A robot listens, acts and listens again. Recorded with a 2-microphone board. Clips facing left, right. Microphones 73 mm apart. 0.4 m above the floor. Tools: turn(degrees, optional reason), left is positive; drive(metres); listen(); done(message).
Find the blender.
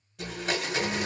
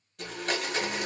turn(degrees=30)
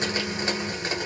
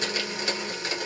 turn(degrees=150, reason="So it is at 150° left.")
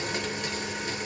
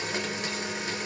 done("Facing the blender, 1 to 2 m away.")